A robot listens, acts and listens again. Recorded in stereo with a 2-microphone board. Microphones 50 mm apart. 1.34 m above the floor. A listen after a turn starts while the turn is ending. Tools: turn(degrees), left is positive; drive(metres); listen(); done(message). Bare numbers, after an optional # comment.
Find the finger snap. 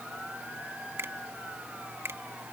# The finger snap: about 65° right or 115° right.
turn(-65)
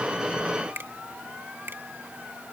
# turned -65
# So it is at 50° right.
turn(-50)
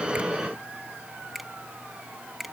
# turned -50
done("Found it: a finger snap, straight ahead.")